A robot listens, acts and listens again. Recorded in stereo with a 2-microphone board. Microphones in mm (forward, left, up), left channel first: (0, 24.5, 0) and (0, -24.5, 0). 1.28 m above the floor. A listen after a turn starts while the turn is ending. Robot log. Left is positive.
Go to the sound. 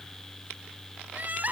note: The crying: about 35° right or 145° right.
cmd yaw -35
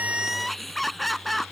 cmd fwd 1.0
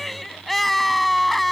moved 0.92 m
cmd fwd 1.0
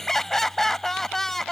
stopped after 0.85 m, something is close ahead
note: The crying is now 10° left.
cmd yaw +10
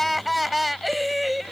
end: I am next to the crying.